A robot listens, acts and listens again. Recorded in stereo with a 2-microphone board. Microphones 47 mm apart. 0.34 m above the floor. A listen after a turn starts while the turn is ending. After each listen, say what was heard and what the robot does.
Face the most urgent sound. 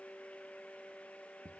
Keep listening.
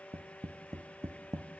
Keep listening.
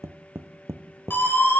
The siren: about 45° left or 135° left. Turn 45° left.
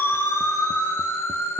So it is at 85° left. Turn 85° left.
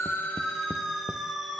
Found it: a siren, straight ahead, over 4 m away.